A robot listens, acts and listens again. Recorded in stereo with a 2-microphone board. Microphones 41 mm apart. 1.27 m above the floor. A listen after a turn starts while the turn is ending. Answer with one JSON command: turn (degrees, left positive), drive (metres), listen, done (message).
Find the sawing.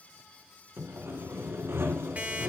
{"turn": -90}
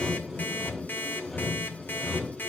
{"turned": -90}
{"done": "Facing the sawing, 2 to 4 m away."}